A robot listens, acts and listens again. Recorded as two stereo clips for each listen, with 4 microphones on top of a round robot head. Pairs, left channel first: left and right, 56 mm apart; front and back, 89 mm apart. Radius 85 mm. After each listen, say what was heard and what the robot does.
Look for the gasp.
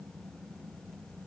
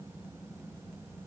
Keep listening.
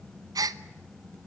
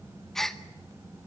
The gasp: 90° right. Turn 90° right.
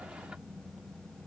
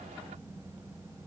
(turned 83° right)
I heard a gasp from this way, but can't make it out now.